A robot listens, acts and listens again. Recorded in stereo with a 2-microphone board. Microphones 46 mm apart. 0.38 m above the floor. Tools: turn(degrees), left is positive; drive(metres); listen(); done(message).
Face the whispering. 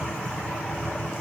listen()
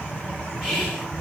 turn(degrees=-30)
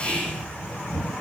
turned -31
turn(degrees=20)
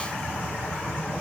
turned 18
listen()
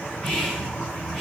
done("Found it: whispering, straight ahead, 2 to 4 m away.")